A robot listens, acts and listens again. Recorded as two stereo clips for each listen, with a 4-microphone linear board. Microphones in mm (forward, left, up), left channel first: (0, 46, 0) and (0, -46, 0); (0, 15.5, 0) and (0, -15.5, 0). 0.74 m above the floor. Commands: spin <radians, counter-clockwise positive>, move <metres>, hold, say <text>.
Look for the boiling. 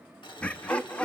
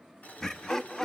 spin 0.96
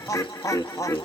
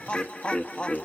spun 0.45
hold
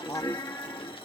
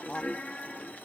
spin 1.57
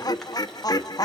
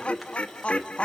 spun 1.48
hold
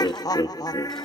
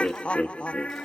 hold
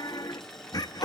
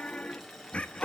say Found it: boiling, straight ahead.